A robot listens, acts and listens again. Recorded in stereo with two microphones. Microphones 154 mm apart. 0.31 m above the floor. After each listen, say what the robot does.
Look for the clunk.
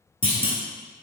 Turn 35° left.
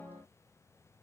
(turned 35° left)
Keep listening.
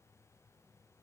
I heard a clunk, but can't make it out now. It was about straight ahead or 110° left.